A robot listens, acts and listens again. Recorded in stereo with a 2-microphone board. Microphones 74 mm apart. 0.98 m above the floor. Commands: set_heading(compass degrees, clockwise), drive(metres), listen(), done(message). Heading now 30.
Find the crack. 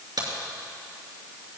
set_heading(105)
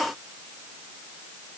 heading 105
listen()
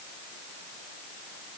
done("I heard a crack, but can't make it out now. It was about straight ahead or 30° right.")